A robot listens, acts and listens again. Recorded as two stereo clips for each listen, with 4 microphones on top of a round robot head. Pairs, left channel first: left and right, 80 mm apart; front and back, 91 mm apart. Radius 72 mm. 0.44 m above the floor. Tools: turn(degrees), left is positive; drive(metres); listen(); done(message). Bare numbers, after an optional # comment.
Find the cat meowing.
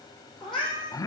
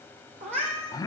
# The cat meowing: straight behind.
turn(180)
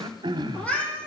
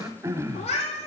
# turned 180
# The cat meowing is now 15° left.
turn(15)
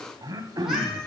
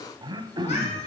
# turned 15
listen()
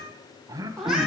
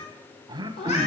done("Found it: a cat meowing, straight ahead, 2 to 4 m away.")